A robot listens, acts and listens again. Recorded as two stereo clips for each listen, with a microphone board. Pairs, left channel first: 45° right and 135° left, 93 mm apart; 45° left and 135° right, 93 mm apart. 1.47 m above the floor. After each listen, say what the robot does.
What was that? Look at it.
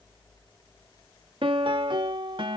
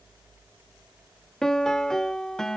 Turn 130° left.
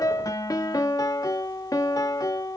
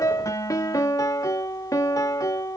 Facing the piano.